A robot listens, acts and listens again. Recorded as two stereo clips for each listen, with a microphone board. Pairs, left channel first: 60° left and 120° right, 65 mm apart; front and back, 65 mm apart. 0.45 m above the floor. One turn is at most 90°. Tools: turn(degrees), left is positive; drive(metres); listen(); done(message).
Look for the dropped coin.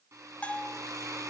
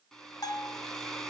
listen()
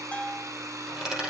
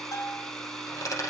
turn(degrees=-40)
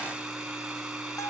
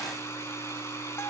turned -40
done("Facing where the dropped coin came from. I can't hear it now.")